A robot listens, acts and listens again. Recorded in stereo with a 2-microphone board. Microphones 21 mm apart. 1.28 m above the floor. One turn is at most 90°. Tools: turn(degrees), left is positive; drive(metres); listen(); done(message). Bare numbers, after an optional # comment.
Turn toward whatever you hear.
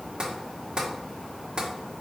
# The tapping: about 40° right or 140° right.
turn(-40)
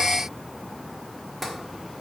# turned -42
done("Found it: tapping, straight ahead.")